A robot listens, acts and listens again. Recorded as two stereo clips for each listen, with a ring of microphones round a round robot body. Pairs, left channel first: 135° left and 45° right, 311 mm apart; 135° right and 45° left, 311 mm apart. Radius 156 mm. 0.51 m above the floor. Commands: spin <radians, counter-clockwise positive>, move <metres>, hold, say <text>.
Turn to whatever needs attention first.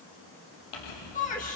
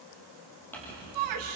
spin 1.22
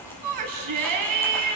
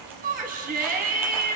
spin -0.35
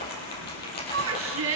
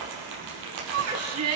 say Found it: a shout, straight ahead, 2 to 4 m away.